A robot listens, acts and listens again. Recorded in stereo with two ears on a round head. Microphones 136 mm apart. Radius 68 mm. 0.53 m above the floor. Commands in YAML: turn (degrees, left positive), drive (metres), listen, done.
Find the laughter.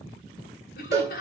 turn: 70
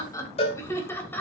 turn: 10
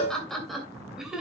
done: "Facing the laughter, 2 to 4 m away."